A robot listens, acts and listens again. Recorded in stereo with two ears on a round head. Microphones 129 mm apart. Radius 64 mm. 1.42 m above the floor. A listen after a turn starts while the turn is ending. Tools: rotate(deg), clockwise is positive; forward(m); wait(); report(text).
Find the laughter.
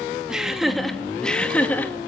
rotate(-30)
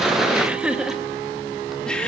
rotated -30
rotate(-30)
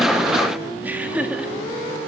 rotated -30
rotate(10)
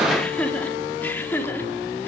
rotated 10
rotate(-10)
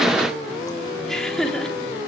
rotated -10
report("Found it: laughter, straight ahead.")